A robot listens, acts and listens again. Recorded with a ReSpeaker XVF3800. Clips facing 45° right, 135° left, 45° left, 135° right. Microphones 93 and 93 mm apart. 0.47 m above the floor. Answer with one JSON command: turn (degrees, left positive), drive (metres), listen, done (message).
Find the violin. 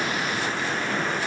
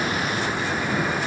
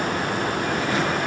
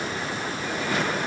{"listen": true}
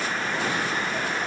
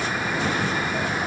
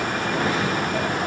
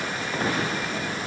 {"listen": true}
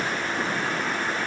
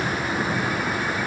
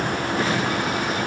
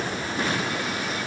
{"done": "I can't make out a violin."}